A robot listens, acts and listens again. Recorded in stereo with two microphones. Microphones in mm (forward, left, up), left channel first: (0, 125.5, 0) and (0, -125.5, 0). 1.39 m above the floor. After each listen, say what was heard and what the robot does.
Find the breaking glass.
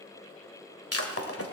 The breaking glass: about 65° left or 115° left. Turn 65° left.
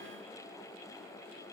Keep listening.
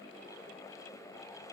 I heard breaking glass, but can't make it out now. It was about straight ahead or 50° left.